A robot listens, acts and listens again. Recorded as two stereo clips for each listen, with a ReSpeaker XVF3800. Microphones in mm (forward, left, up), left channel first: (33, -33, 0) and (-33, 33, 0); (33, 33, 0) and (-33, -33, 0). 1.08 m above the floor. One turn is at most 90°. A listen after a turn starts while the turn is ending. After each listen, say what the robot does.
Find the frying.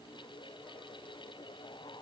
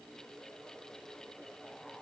Keep listening.
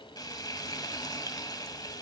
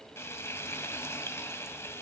Turn 10° right.
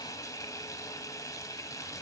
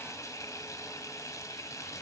Facing the frying, 1 to 2 m away.